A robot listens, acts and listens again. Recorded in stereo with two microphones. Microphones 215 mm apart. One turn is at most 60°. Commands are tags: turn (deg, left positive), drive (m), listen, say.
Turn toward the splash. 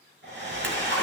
<turn deg="-60"/>
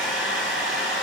<listen/>
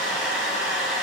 <say>I heard a splash, but can't make it out now. It was about 5° right or 55° right.</say>